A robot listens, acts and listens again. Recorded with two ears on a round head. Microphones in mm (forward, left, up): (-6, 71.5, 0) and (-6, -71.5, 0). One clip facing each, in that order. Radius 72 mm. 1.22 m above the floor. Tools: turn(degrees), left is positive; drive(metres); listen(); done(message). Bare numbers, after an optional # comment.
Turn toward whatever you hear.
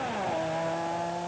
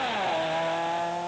listen()
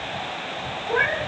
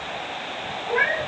turn(-30)
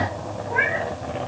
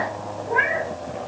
# So it is at 135° right.
turn(-135)
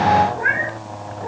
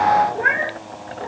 # The cat meowing is now 30° right.
turn(-30)
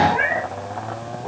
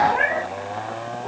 done("Facing the cat meowing, over 4 m away.")